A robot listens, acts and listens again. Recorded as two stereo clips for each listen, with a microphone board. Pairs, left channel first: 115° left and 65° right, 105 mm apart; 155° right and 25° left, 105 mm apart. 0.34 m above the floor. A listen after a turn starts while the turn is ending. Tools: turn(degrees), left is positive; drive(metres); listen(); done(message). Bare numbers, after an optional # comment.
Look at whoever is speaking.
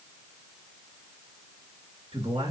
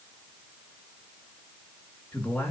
# The man speaking: 85° right.
turn(-85)
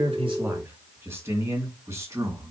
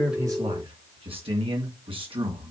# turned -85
done("Facing the man speaking, 2 to 4 m away.")